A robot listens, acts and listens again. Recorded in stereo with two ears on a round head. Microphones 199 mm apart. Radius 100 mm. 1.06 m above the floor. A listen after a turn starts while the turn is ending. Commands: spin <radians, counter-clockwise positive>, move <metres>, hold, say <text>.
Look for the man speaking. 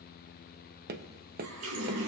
hold
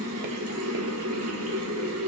hold
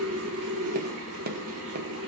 say I can't make out a man speaking to turn to.